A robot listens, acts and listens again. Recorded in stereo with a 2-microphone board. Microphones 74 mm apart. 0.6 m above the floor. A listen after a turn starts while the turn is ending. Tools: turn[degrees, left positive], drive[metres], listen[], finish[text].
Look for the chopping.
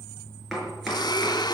Action: turn[30]
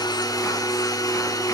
Action: listen[]
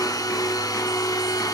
Action: listen[]
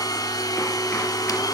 Action: finish[I heard chopping, but can't make it out now. It was about 30° right or 150° left.]